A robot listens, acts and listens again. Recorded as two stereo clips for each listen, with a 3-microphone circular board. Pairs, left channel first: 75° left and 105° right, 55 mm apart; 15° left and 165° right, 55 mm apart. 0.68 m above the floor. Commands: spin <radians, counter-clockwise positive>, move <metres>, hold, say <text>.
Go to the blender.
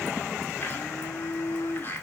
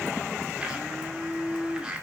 spin 2.18
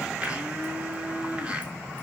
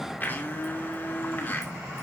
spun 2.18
spin -0.61
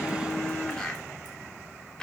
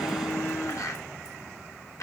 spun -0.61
move 1.0
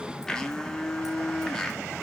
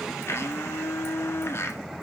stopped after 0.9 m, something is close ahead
say I am next to the blender.